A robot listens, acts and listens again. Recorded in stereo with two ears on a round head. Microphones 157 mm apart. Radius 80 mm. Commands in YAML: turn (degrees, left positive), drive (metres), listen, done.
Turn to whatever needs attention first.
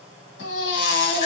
turn: 90
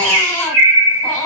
done: "Facing the baby crying, 1 to 2 m away."